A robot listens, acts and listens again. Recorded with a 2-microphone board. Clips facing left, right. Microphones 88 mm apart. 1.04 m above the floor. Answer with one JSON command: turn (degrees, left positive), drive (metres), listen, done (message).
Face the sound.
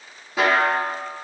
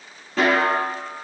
{"turn": 30}
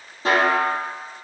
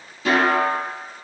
{"turn": 140}
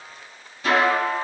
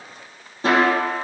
{"turn": -35}
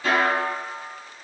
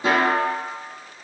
{"turn": -20}
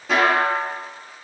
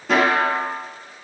{"done": "Facing the snare drum."}